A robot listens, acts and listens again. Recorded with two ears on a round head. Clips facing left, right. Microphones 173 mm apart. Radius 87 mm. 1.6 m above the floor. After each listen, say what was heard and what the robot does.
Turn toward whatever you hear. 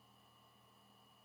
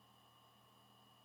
Keep listening.
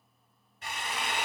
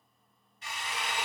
The drill: about 45° left or 135° left. Turn 45° left.
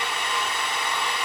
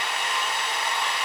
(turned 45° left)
So it is at 90° left. Turn 90° left.
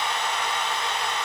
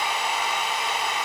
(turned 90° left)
Found it: a drill, straight ahead.